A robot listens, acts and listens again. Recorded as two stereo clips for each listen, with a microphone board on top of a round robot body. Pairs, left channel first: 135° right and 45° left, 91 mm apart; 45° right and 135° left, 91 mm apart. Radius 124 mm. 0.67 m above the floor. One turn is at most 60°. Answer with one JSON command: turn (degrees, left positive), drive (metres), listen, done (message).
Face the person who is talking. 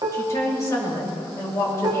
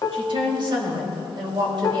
{"turn": 60}
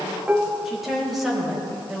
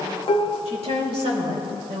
{"turn": 60}
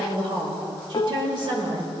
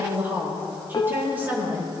{"turn": 60}
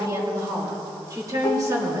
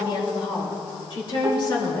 {"done": "Facing the woman speaking, 2 to 4 m away."}